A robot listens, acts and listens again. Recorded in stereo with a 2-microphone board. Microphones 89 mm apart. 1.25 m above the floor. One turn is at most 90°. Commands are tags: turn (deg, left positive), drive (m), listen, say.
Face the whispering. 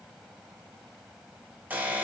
<listen/>
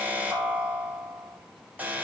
<listen/>
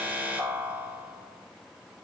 <say>I can't make out whispering to turn to.</say>